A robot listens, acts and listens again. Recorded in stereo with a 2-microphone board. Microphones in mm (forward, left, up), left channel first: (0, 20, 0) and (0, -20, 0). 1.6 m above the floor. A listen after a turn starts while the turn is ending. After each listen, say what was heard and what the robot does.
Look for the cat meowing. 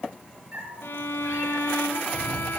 The cat meowing: about 45° right or 135° right. Turn 45° right.
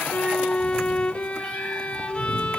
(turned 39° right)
So it is at 10° right. Turn 10° right.
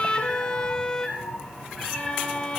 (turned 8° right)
Facing the cat meowing, over 4 m away.